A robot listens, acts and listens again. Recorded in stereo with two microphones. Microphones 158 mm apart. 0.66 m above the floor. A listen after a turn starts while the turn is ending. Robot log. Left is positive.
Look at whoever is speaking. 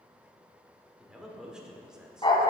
cmd yaw -30
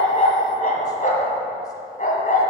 cmd idle
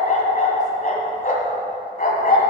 cmd idle
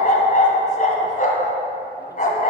end: I heard a man speaking, but can't make it out now. It was about 25° left or 145° right.